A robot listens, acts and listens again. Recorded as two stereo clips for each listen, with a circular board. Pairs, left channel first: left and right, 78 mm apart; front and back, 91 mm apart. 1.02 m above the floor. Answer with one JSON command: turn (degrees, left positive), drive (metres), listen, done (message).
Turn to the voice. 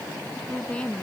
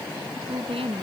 {"turn": 165}
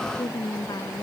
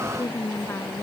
{"turn": 60}
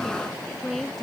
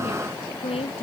{"done": "Facing the woman speaking."}